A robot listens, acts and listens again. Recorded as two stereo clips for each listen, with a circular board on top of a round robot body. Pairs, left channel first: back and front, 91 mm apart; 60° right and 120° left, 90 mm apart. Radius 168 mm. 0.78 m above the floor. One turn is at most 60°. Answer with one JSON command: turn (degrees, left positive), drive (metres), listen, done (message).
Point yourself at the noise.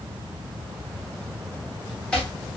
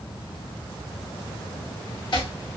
{"turn": -60}
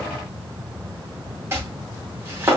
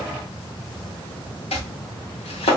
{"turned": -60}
{"turn": -60}
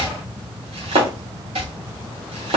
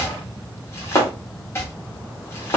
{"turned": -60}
{"done": "Facing the chopping."}